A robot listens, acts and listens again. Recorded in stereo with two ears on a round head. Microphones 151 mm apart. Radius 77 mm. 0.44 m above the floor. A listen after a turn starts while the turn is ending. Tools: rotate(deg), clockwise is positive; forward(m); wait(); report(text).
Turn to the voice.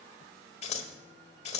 wait()
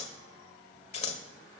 wait()
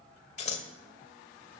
report("I can't make out anyone speaking to turn to.")